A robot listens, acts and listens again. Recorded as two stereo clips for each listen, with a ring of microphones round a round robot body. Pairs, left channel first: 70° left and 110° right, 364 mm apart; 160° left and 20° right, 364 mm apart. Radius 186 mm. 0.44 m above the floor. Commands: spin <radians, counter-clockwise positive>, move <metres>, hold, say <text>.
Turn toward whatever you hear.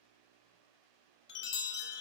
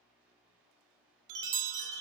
spin 0.17
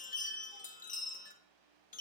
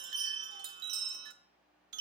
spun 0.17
say Found it: a chime, straight ahead, under 1 m away.